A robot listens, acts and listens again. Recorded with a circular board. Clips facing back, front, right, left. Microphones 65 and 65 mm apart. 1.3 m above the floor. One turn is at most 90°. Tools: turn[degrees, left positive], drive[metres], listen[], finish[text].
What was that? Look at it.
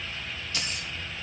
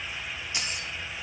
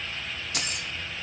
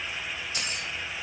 Thought: The keys jangling: 65° right.
Action: turn[-65]
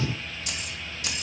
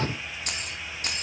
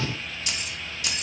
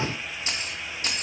Thought: The keys jangling is now 45° left.
Action: turn[45]
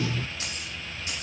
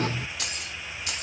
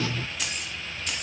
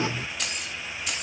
Action: finish[Facing the keys jangling.]